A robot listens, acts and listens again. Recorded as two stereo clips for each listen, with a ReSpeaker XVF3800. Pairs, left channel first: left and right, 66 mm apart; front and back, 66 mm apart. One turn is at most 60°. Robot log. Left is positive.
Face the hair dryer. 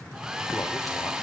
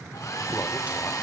note: The hair dryer: 15° right.
cmd yaw -15
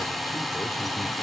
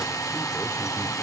end: Facing the hair dryer.